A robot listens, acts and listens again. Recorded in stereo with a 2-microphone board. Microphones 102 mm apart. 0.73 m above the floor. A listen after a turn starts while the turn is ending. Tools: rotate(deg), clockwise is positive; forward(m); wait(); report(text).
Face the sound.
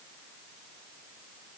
wait()
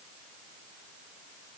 wait()
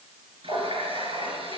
rotate(60)
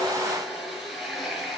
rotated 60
report("Found it: a running tap, straight ahead.")